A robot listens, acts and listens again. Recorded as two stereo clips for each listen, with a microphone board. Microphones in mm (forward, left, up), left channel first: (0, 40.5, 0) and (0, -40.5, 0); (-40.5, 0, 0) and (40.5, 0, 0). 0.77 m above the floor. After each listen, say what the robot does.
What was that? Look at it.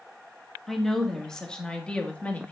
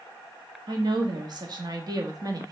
Turn 20° left.
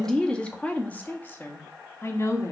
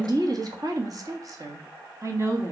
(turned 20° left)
Turn 45° left.
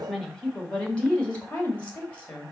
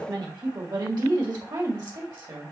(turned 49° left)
Turn 20° left.
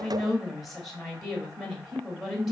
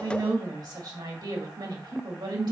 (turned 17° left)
Facing the woman speaking, 1 to 2 m away.